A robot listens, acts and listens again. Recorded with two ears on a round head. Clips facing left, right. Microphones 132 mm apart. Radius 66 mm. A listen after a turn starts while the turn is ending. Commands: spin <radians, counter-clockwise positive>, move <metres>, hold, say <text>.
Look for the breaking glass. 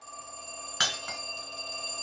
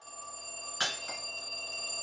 spin 1.31
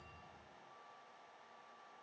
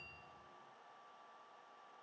hold
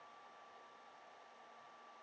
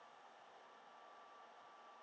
say I heard breaking glass, but can't make it out now. It was about straight ahead or 30° left.